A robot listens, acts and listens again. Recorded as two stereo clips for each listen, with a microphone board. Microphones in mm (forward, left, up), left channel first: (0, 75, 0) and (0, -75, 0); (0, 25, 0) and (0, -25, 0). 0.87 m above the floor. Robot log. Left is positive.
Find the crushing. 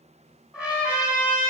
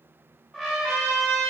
cmd idle
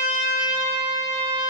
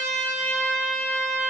cmd idle
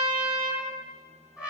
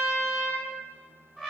end: I can't make out crushing to turn to.